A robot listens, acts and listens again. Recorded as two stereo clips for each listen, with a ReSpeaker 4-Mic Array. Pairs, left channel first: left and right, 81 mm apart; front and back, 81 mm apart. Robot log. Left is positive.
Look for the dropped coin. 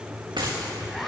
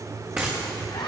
note: The dropped coin: 110° right.
cmd yaw -110
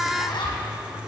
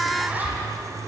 end: I heard a dropped coin from this way, but can't make it out now.